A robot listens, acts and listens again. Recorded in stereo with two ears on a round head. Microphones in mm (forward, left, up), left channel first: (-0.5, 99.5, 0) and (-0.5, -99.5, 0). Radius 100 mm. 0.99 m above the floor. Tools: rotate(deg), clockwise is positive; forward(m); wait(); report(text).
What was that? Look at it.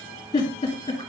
rotate(-20)
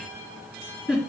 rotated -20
report("Found it: a giggle, straight ahead.")